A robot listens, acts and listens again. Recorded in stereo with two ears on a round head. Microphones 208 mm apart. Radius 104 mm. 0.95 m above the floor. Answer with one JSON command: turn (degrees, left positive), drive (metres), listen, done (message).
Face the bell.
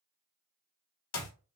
{"listen": true}
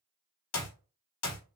{"listen": true}
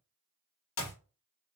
{"done": "I can't make out a bell to turn to."}